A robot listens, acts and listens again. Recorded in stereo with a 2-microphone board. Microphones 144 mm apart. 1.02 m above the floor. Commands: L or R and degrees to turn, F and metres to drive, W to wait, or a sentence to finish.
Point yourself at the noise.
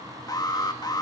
L25
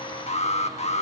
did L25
L130
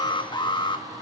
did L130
L35
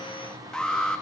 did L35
Facing the alarm, 1 to 2 m away.